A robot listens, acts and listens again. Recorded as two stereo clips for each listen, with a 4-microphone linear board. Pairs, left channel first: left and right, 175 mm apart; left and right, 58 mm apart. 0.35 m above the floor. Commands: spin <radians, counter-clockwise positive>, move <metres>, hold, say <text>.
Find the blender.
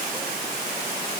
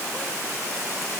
hold
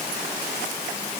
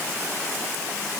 hold
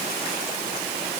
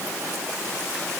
say I can't make out a blender to turn to.